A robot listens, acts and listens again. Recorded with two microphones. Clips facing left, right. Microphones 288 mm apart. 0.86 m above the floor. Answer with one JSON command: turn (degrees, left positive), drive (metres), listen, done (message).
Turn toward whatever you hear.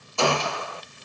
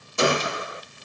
{"turn": -20}
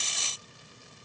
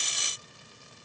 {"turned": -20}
{"listen": true}
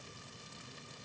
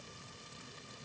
{"done": "I heard a gunshot, but can't make it out now. It was about straight ahead or 140° right."}